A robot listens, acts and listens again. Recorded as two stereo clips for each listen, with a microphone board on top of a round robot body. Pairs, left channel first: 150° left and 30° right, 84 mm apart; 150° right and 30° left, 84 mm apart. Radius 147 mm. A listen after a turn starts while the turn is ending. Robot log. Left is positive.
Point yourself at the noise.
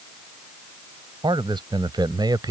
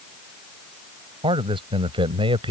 note: The man speaking: 10° left.
cmd yaw +10
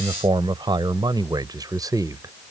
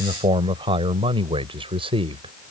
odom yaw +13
note: The man speaking is now 20° left.
cmd yaw +20
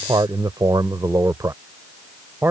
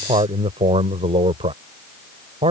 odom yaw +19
note: The man speaking is now 30° left.
cmd yaw +30
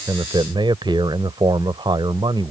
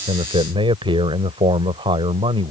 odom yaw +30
end: Found it: a man speaking, straight ahead.